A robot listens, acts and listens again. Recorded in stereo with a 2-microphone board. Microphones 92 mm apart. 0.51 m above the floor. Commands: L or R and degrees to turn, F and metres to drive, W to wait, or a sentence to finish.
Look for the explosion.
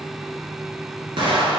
R65
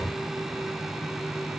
W
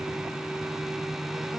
I heard an explosion, but can't make it out now. It was about straight ahead or 50° right.